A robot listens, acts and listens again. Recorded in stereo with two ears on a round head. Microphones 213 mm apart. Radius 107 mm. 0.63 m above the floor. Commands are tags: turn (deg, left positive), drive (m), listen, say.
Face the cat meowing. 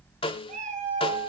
<turn deg="-30"/>
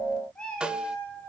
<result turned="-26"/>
<say>Facing the cat meowing.</say>